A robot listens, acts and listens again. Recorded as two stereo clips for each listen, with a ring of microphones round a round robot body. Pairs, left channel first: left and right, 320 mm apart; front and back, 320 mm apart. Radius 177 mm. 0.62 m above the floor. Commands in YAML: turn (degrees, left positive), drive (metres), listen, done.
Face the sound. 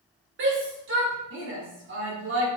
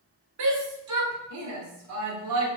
turn: -145
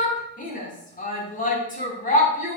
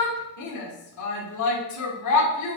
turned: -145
turn: 25
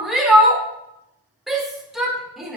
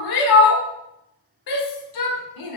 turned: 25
done: "Found it: a shout, straight ahead, 1 to 2 m away."